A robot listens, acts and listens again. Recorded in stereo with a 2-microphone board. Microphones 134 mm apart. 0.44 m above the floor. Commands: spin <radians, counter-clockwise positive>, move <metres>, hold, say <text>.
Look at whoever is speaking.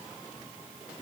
hold
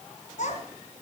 spin 1.13
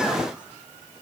hold
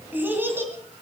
spin -0.35
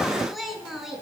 say Found it: a child speaking, straight ahead, 2 to 4 m away.